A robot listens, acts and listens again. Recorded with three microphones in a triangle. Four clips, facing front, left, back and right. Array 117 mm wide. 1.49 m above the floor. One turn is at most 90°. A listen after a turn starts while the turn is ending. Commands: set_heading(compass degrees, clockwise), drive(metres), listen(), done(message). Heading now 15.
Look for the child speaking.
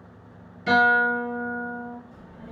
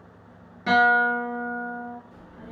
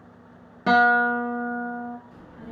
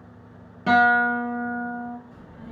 set_heading(285)
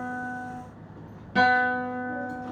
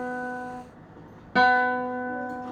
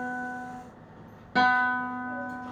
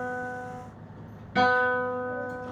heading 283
set_heading(218)
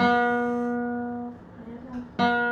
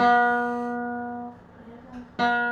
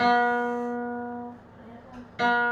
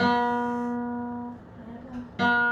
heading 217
done("Facing the child speaking.")